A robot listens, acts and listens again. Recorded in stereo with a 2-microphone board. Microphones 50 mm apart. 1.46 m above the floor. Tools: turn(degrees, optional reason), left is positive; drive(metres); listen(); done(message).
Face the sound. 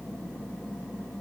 listen()
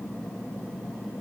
listen()
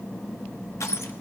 turn(degrees=70, reason="The crushing: about 70° left or 110° left.")
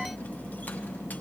listen()
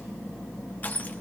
turn(degrees=35, reason="So it is at 35° left.")
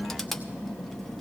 done("Found it: crushing, straight ahead.")